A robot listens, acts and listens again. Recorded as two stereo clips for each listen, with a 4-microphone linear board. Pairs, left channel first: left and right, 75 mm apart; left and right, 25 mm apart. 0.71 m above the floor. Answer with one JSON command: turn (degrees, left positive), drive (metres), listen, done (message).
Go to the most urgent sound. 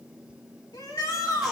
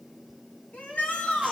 {"turn": 70}
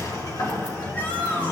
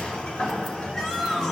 {"listen": true}
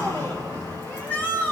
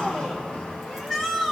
{"turn": 25}
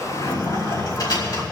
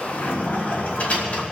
{"listen": true}
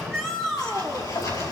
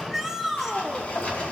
{"drive": 1.0}
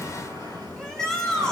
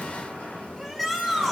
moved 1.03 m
{"turn": 10}
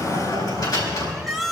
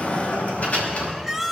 {"drive": 1.0}
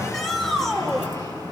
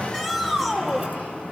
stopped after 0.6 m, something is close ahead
{"turn": 10}
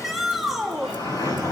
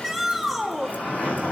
{"done": "I am next to the shout."}